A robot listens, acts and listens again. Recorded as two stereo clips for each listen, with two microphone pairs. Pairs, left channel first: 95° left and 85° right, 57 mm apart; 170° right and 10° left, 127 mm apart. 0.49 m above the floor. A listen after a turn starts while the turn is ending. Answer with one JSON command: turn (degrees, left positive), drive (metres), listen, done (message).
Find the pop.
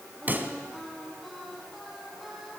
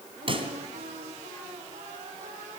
{"turn": -30}
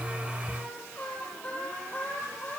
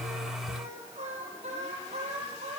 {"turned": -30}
{"done": "Facing where the pop came from. I can't hear it now."}